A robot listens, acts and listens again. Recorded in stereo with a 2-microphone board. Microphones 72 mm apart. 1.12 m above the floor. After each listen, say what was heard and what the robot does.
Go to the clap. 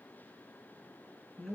Keep listening.
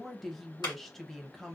Turn 90° left.
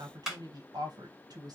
So it is at 10° right. Turn 10° right.
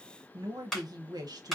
Drive 1.0 m forward.
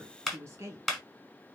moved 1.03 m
Drive 1.0 m forward.
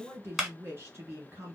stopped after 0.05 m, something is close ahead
I am next to the clap.